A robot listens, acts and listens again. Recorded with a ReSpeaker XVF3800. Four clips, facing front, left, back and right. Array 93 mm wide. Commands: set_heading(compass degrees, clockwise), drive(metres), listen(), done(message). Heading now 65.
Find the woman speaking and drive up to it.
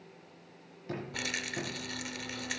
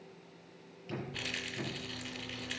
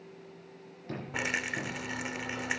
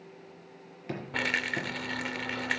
listen()
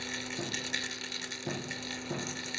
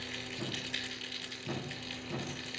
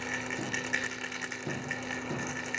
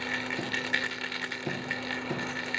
listen()
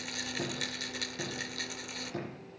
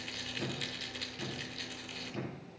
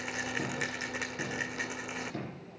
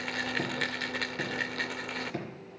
done("I can't make out a woman speaking to turn to.")